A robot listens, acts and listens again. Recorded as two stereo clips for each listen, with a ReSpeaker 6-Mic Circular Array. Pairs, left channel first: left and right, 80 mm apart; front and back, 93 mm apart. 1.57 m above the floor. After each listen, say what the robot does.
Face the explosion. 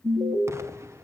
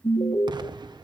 Turn 145° right.
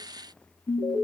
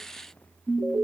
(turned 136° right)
Turn 10° right.
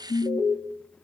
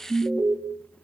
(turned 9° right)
Facing where the explosion came from. I can't hear it now.